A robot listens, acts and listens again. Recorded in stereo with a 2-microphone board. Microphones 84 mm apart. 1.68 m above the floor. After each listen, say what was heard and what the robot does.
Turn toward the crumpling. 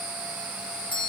Keep listening.
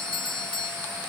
Keep listening.
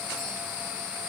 I can't make out crumpling to turn to.